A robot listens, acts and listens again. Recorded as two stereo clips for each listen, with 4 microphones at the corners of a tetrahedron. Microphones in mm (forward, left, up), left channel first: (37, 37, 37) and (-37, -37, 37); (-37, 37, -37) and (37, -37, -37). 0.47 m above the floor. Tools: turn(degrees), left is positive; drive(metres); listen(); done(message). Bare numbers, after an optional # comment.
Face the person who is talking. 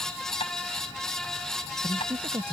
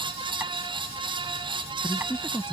# The man speaking: 160° right.
turn(-160)
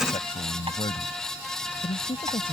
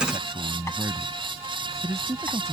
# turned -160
# The man speaking is now 15° left.
turn(15)
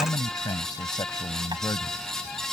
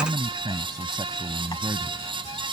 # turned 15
done("Found it: a man speaking, straight ahead.")